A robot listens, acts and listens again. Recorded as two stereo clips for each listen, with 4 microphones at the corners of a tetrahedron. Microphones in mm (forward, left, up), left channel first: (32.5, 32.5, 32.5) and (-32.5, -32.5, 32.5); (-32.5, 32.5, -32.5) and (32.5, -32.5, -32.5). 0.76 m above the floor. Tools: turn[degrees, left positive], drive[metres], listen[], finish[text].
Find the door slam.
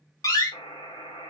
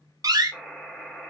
Action: finish[Facing the door slam.]